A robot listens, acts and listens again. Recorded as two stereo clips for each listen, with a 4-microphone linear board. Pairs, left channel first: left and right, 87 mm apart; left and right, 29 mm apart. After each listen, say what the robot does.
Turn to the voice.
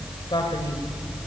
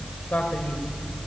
Turn 60° left.
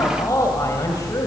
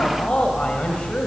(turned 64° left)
Turn 40° left.
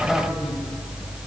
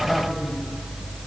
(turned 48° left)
Keep listening.
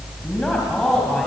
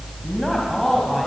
Turn 10° left.
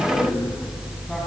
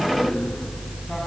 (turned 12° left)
Found it: a man speaking, straight ahead.